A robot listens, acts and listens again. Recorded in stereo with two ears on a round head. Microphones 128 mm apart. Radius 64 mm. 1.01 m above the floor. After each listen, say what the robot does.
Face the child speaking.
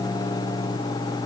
Keep listening.
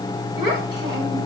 Turn 30° right.
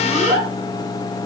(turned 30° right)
Found it: a child speaking, straight ahead.